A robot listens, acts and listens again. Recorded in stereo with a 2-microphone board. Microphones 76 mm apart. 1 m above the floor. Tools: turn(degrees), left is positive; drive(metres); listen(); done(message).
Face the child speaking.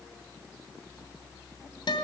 listen()
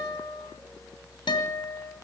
listen()
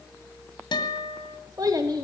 turn(degrees=-50)
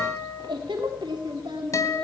turn(degrees=-85)
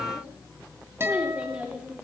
turn(degrees=-15)
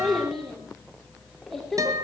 done("Found it: a child speaking, straight ahead.")